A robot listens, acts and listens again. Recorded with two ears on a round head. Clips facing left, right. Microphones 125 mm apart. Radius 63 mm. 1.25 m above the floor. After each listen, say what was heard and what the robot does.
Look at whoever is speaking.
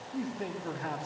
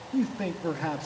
Turn 90° right.
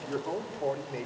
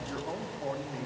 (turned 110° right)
So it is at 30° left. Turn 30° left.
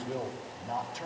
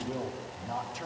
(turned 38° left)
Facing the man speaking, 2 to 4 m away.